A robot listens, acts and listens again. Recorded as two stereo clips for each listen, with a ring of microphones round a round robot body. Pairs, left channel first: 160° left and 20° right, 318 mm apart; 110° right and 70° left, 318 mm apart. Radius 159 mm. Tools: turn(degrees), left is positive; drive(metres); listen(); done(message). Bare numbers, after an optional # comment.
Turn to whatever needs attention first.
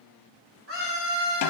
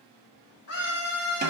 # The scream: 70° right.
turn(-70)
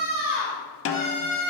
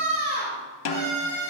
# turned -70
done("Facing the scream, 2 to 4 m away.")